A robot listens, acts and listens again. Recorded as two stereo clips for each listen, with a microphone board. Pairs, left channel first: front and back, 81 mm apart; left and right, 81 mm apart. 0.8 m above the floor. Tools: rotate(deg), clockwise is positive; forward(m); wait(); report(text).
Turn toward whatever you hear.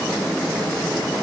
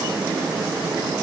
wait()
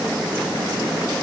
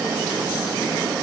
wait()
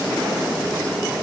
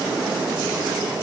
report("I can't make out anything.")